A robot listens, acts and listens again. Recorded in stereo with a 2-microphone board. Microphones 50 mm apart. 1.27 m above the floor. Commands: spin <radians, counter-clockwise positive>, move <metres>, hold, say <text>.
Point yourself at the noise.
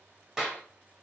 spin -0.52
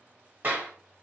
spin -2.36
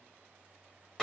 spin 0.17
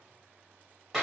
say Facing the clap.